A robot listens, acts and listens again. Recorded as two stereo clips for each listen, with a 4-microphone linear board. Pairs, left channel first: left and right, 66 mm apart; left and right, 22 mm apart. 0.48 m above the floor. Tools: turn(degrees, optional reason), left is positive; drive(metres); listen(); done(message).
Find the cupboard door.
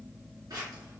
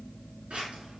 listen()
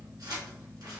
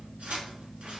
listen()
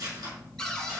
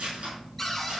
turn(degrees=30)
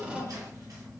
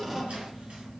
turn(degrees=-15, reason="So it is at 15° right.")
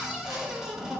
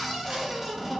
turn(degrees=-10, reason="The cupboard door is now 10° right.")
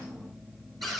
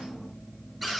done("Found it: a cupboard door, straight ahead.")